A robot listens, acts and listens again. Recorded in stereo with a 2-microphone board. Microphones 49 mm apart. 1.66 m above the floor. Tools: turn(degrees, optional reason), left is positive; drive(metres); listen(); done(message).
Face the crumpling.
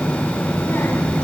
listen()
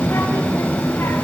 listen()
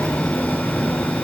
done("I can't make out crumpling, only a child speaking.")